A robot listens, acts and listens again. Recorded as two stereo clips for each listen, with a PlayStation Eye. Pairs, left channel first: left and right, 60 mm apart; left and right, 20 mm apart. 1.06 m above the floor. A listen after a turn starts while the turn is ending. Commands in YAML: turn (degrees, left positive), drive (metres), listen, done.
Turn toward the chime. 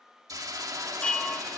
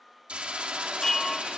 turn: 15
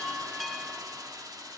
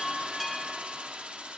done: "Facing the chime, 1 to 2 m away."